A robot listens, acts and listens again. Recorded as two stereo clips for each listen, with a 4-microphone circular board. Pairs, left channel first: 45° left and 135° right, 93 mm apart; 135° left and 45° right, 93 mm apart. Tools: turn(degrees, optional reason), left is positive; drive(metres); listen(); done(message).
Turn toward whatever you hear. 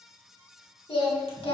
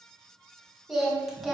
turn(degrees=45, reason="The singing: 45° left.")
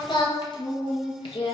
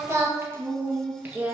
turn(degrees=30, reason="The singing is now 30° left.")
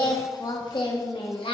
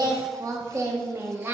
turn(degrees=25, reason="The singing is now 25° left.")
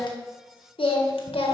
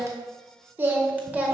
turn(degrees=30, reason="The singing is now 30° left.")
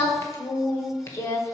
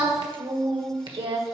turn(degrees=-15, reason="The singing is now 15° right.")
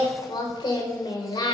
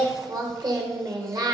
done("Facing the singing, 1 to 2 m away.")